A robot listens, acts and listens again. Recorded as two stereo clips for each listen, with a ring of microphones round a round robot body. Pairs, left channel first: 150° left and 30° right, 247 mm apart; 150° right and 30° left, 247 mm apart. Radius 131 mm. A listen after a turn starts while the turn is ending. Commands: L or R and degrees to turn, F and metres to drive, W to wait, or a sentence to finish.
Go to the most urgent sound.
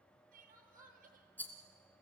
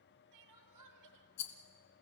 L30
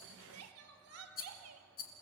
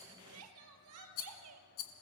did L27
F1.0
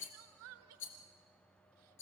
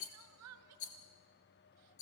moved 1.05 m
F1.0
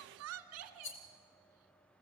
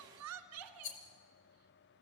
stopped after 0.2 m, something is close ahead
Arrived at the crying, straight ahead.